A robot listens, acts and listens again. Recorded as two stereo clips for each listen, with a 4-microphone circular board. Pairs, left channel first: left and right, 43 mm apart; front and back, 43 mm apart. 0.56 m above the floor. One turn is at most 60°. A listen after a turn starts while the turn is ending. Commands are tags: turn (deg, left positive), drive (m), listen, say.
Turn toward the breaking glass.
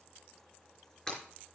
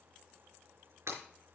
<turn deg="60"/>
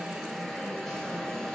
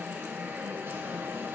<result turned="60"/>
<turn deg="60"/>
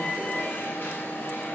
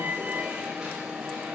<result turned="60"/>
<turn deg="40"/>
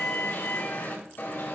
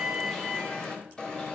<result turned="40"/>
<say>I heard breaking glass from this way, but can't make it out now.</say>